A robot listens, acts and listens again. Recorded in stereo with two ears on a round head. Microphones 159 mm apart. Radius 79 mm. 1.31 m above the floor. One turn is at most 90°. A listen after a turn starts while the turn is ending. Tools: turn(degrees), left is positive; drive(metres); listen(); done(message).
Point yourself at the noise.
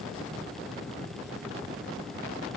listen()
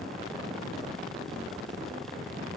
listen()
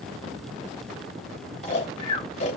turn(degrees=40)
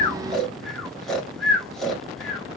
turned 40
done("Found it: snoring, straight ahead.")